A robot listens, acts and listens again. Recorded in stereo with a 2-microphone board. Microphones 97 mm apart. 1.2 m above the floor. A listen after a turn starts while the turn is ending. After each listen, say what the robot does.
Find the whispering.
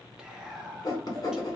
Turn 30° right.
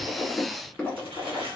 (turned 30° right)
Keep listening.
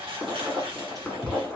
Turn 140° right.
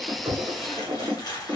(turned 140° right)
Keep listening.
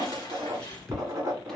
Facing the whispering, under 1 m away.